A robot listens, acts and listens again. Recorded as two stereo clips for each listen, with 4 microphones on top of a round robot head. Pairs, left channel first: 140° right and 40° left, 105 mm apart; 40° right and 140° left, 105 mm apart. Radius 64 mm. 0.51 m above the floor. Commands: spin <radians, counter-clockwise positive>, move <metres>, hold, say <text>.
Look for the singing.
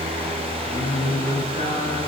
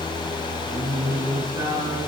spin -2.79
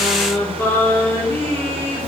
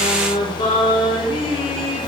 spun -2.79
spin -1.31
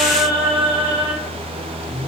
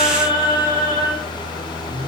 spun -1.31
say Facing the singing, over 4 m away.